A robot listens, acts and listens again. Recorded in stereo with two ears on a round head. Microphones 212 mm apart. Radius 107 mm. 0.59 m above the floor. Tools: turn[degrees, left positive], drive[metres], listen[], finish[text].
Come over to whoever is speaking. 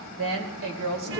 Thought: The woman speaking: about 60° right or 120° right.
Action: turn[-60]
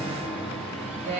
Thought: So it is at 45° right.
Action: turn[-45]
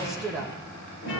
Action: drive[1.0]
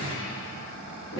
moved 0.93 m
Action: listen[]
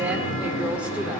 Action: listen[]
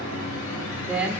Action: drive[1.0]
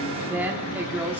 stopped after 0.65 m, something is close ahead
Thought: The woman speaking is now 10° right.
Action: turn[-10]
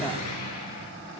Action: finish[Arrived at the woman speaking, straight ahead.]